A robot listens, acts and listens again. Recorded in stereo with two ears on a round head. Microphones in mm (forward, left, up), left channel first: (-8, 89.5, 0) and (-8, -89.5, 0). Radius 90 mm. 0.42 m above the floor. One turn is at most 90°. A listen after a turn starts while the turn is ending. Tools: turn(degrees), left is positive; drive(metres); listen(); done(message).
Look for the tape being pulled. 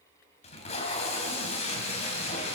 turn(degrees=35)
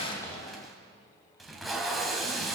done("Facing the tape being pulled, 2 to 4 m away.")